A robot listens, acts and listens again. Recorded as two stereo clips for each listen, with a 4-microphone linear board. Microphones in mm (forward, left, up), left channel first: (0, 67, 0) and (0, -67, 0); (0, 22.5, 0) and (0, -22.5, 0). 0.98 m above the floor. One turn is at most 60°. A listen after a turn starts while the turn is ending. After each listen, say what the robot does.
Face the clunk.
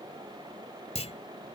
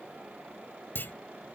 Turn 50° left.
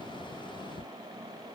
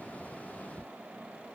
Keep listening.
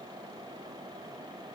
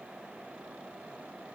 I heard a clunk, but can't make it out now. It was about straight ahead or 80° left.